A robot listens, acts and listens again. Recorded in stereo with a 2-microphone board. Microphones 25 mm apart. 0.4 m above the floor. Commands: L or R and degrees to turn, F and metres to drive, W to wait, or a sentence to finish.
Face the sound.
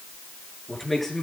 L30
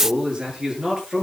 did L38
R30
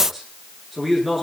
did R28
Found it: a man speaking, straight ahead.